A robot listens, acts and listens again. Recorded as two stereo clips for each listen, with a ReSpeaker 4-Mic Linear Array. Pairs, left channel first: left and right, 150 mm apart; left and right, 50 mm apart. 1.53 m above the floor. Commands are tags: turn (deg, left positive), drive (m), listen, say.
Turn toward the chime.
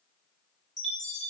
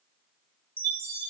<turn deg="50"/>
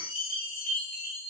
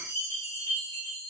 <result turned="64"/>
<turn deg="70"/>
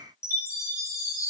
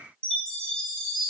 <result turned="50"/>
<turn deg="20"/>
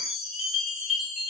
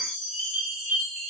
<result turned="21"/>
<say>Facing the chime, under 1 m away.</say>